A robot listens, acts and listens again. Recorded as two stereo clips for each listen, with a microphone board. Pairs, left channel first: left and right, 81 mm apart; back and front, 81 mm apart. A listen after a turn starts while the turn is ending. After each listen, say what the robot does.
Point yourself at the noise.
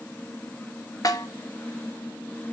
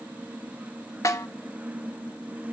Turn 135° left.
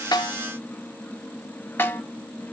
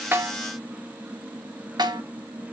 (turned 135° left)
Turn 30° left.
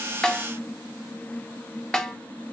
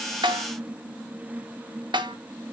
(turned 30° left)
Turn 10° left.
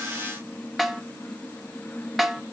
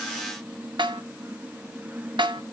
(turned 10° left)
Found it: a snare drum, straight ahead, 1 to 2 m away.